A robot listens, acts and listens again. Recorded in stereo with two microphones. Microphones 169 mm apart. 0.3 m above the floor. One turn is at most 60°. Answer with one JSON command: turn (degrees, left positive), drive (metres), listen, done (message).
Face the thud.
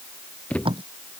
{"turn": 30}
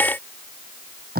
{"listen": true}
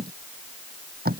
{"done": "I heard a thud, but can't make it out now. It was about 20° right or 140° left."}